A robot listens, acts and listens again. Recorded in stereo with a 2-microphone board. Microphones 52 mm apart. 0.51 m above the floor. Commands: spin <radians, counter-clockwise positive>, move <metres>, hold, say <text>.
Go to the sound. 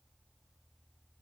hold
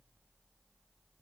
hold
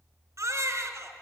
spin -1.22
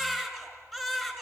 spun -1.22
move 1.0
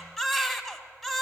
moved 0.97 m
move 1.0
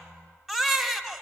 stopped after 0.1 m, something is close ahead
say I am next to the baby crying.